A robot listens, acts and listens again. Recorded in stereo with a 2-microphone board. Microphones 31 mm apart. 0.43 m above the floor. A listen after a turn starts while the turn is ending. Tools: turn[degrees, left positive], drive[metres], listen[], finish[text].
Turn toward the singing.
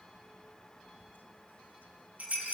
Action: listen[]
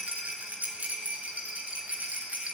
Action: listen[]
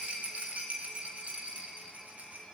Action: finish[I can't make out singing to turn to.]